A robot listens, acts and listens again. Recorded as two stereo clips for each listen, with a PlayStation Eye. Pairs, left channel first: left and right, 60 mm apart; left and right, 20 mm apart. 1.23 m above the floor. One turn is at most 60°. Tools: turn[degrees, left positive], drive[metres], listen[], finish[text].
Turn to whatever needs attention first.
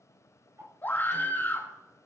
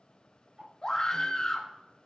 Thought: The scream: about 30° left or 150° left.
Action: turn[30]
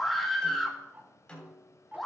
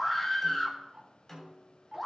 Action: finish[Facing the scream, 1 to 2 m away.]